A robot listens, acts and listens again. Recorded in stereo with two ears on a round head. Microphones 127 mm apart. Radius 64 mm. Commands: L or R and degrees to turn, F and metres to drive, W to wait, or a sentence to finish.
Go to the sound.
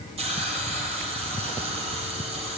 R45
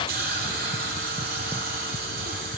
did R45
R85
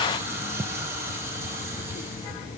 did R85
R20
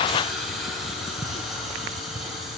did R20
F1.0
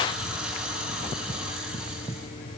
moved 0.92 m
F1.0
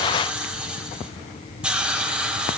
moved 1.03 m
R10
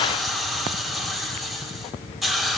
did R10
F1.0
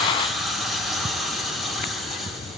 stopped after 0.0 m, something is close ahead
I am next to the hiss.